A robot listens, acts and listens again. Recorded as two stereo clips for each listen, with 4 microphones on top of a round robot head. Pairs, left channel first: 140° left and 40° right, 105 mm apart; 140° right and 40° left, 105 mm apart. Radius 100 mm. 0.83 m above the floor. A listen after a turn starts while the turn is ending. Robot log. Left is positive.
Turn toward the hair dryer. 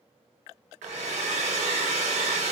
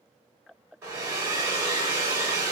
note: The hair dryer: 25° right.
cmd yaw -25
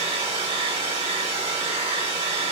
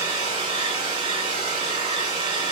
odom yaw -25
end: Found it: a hair dryer, straight ahead, 1 to 2 m away.